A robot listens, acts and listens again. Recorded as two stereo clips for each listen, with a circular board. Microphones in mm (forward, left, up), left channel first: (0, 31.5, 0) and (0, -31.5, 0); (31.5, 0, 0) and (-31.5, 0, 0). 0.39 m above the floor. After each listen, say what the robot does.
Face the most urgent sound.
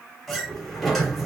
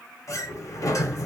Keep listening.
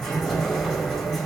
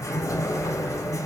Keep listening.
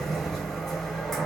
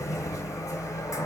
I can't make out anything urgent, only a sliding door.